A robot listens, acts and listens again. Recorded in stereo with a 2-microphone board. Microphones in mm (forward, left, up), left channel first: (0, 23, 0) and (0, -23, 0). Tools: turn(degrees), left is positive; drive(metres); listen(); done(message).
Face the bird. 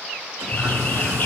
turn(degrees=40)
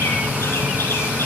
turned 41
turn(degrees=100)
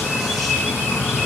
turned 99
done("Facing the bird.")